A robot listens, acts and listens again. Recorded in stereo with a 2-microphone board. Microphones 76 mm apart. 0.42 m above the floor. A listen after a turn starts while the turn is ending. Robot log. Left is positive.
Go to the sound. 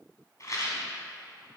note: The rattle: about 45° left or 135° left.
cmd yaw +45
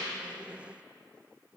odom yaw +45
cmd idle
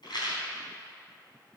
note: So it is at 85° left.
cmd yaw +85
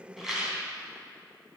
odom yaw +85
note: The rattle is now 20° right.
cmd yaw -20
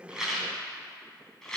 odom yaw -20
cmd fwd 1.0
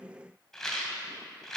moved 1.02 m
cmd fwd 1.0
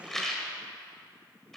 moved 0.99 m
cmd fwd 1.0
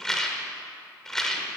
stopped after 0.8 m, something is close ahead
note: The rattle is now 10° left.
cmd yaw +10
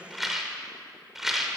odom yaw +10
note: The rattle is now 10° right.
cmd yaw -10
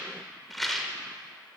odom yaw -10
end: Arrived at the rattle, straight ahead.